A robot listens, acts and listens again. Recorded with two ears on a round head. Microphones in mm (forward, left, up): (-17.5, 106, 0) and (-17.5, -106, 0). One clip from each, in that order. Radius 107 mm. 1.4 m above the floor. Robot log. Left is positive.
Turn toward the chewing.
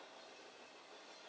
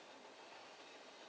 cmd idle
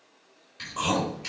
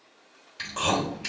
note: The chewing: about 35° right or 145° right.
cmd yaw -35
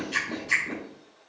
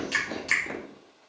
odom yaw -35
note: So it is at 110° right.
cmd yaw -110
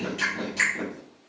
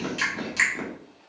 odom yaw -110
note: The chewing is now 30° right.
cmd yaw -30
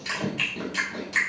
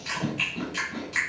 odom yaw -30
note: The chewing is now 10° left.
cmd yaw +10
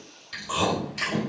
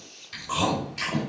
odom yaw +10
end: Facing the chewing.